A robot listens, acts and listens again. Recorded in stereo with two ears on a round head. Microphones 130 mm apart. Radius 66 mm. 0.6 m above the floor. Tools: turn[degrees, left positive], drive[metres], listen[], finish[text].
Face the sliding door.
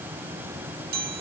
Action: listen[]
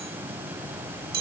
Action: listen[]
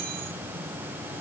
Action: finish[I can't make out a sliding door to turn to.]